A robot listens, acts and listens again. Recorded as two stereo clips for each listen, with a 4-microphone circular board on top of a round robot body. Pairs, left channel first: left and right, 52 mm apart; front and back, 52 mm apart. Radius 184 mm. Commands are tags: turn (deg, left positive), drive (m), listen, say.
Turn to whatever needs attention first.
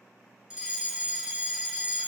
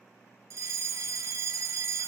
<turn deg="-165"/>
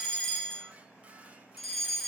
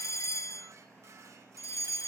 <turn deg="10"/>
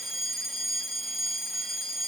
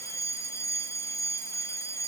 <say>Facing the fire alarm.</say>